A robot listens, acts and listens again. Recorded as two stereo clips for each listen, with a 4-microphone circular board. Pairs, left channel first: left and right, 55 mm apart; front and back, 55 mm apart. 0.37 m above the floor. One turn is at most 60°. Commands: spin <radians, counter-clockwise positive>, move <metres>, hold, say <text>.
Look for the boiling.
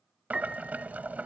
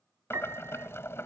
spin -0.52
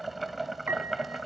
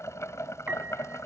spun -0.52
say Found it: boiling, straight ahead.